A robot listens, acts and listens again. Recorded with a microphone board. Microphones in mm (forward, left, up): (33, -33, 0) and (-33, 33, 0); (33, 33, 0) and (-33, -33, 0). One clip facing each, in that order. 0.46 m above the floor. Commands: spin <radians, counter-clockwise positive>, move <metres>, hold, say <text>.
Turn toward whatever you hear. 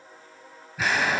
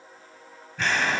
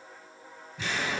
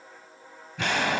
spin -2.27
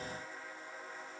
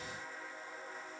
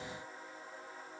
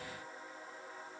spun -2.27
say Facing where the explosion came from. I can't hear it now.